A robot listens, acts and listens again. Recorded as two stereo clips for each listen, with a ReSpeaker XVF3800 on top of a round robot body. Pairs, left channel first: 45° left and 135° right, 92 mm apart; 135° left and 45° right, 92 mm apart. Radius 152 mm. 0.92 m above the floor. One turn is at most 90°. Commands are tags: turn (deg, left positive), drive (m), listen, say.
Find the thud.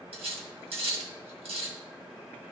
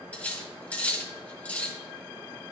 <listen/>
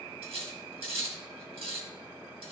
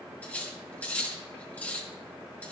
<listen/>
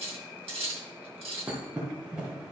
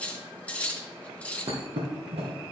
<turn deg="-60"/>
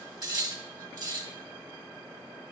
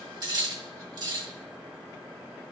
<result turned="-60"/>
<say>Facing where the thud came from. I can't hear it now.</say>